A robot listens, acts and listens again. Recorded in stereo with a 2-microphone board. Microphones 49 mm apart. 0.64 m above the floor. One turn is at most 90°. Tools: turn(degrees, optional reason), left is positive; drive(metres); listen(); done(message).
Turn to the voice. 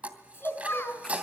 turn(degrees=50, reason="The child speaking: about 50° left or 130° left.")
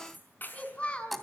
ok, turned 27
turn(degrees=25, reason="So it is at 25° left.")
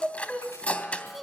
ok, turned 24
done("Facing the child speaking, over 4 m away.")